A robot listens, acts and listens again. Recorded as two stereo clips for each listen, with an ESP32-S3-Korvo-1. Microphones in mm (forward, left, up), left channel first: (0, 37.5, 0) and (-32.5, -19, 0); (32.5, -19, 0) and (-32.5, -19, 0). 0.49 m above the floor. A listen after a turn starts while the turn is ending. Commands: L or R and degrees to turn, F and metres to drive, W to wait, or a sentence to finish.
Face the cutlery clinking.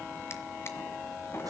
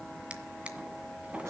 W
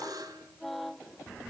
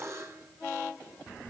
W
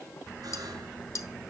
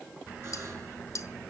L30
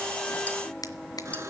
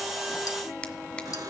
W
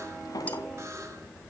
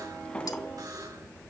W
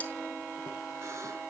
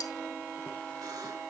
Facing where the cutlery clinking came from. I can't hear it now.